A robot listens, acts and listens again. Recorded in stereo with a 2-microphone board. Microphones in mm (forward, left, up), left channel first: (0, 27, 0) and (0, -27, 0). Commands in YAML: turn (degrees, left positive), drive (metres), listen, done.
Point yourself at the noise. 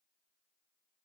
listen: true
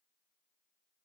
listen: true
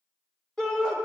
turn: 30
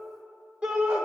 turn: -20
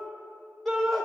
done: "Found it: a shout, straight ahead, 1 to 2 m away."